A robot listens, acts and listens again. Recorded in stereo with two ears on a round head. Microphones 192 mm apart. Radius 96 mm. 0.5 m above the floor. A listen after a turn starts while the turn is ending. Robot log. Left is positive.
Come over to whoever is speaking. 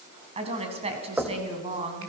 note: The woman speaking: about 30° right or 150° right.
cmd yaw -30
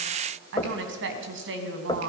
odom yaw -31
note: So it is at 120° right.
cmd yaw -120
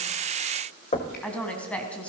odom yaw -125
cmd fwd 1.0
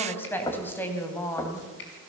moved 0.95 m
note: The woman speaking is now 10° left.
cmd yaw +10
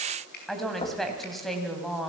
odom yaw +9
cmd fwd 1.0
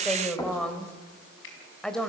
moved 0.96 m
cmd fwd 1.0
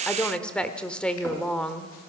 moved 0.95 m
cmd fwd 1.0
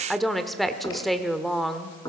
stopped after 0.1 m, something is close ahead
end: Arrived at the woman speaking, straight ahead.